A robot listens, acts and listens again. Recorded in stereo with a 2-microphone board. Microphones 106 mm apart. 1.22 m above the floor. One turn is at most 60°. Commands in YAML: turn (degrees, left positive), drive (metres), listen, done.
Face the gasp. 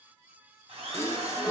turn: 25
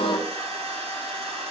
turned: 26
turn: 60
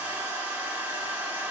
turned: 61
turn: 60
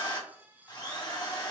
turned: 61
done: "I heard a gasp from this way, but can't make it out now."